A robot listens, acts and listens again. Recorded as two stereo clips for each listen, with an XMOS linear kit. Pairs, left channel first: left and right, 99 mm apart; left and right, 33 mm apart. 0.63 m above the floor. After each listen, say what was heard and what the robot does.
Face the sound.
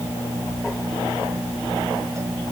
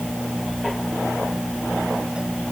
Keep listening.
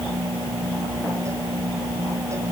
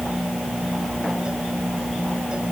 Keep listening.
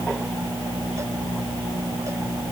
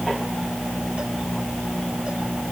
I can't make out anything to turn to.